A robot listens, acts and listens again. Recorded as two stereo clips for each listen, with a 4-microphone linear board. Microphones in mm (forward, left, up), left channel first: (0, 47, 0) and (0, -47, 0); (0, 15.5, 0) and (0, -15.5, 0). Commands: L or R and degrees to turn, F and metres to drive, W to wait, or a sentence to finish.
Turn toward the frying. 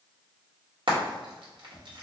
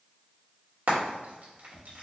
R65
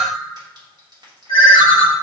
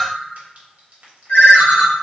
W
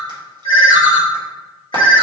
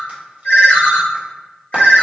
W
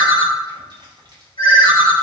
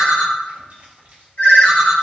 I heard frying, but can't make it out now. It was about straight ahead or 50° right.